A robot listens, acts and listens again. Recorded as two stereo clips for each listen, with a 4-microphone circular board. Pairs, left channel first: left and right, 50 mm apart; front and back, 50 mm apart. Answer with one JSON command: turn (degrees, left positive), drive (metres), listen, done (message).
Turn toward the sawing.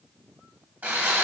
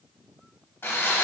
{"turn": -45}
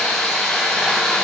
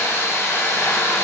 {"done": "Facing the sawing."}